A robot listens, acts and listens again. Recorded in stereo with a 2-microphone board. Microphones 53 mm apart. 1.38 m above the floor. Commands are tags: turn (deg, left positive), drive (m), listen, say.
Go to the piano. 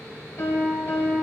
<turn deg="65"/>
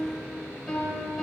<drive m="1.0"/>
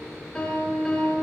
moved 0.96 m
<turn deg="10"/>
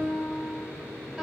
<drive m="1.0"/>
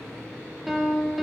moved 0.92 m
<drive m="1.0"/>
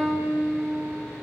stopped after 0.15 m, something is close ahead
<say>Arrived at the piano, straight ahead.</say>